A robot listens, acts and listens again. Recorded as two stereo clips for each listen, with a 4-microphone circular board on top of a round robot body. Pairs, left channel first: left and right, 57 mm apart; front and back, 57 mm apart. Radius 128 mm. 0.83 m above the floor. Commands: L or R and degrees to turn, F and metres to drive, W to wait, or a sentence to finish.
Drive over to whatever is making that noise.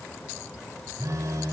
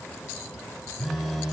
R95
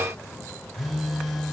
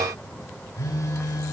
F1.0
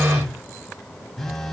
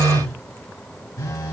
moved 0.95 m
F1.0
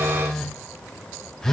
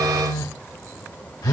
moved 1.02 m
L10
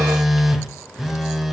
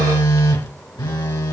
F1.0
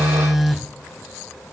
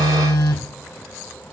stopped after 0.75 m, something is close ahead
Arrived at the phone buzzing, straight ahead.